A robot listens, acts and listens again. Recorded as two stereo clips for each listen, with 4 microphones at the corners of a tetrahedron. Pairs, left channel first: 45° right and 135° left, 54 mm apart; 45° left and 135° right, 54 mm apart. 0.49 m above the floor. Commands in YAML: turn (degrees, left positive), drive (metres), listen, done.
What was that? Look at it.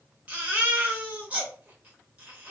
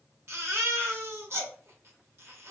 turn: -165
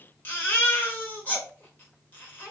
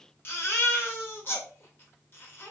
done: "Facing the baby crying."